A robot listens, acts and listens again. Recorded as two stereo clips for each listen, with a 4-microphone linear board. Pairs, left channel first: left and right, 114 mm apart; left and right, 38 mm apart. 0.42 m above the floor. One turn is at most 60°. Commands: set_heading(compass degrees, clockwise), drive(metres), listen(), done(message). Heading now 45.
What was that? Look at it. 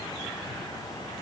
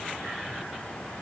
listen()
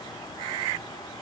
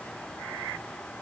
listen()
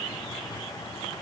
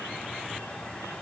done("I can't make out anything to turn to.")